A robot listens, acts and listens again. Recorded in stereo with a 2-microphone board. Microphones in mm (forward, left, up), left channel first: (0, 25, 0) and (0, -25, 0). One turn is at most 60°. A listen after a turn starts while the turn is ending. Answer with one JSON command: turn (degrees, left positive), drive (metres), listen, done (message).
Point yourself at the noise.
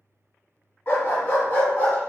{"turn": 35}
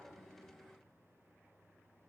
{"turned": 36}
{"listen": true}
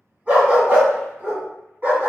{"turn": -45}
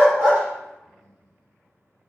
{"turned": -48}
{"listen": true}
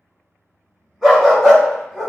{"turn": -10}
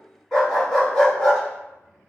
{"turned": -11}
{"done": "Facing the dog barking."}